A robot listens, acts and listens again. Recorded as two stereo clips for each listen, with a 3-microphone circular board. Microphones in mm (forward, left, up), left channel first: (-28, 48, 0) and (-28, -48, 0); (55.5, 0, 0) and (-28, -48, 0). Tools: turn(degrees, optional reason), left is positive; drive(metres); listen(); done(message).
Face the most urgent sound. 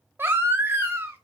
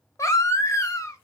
turn(degrees=-25, reason="The baby crying: 25° right.")
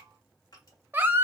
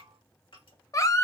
turn(degrees=-25, reason="The baby crying is now 25° right.")
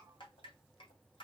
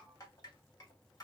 listen()
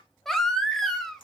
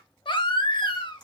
done("Facing the baby crying.")